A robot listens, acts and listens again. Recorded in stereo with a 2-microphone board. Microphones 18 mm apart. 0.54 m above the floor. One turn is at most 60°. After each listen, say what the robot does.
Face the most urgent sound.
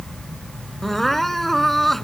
Turn 30° left.
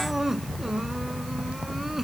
Keep listening.
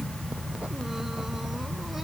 Keep listening.
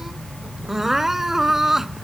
Turn 20° right.
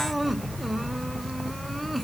Keep listening.
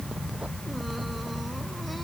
Keep listening.
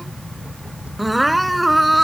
Facing the crying.